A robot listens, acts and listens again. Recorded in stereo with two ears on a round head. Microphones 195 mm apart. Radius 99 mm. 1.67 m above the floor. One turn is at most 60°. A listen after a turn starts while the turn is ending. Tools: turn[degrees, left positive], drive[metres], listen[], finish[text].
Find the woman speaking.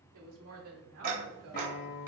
Action: turn[-60]
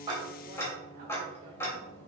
Thought: Nothing new. It was at 30° right.
Action: turn[-30]
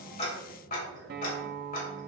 Action: listen[]
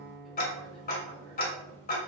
Action: finish[I heard a woman speaking from this way, but can't make it out now.]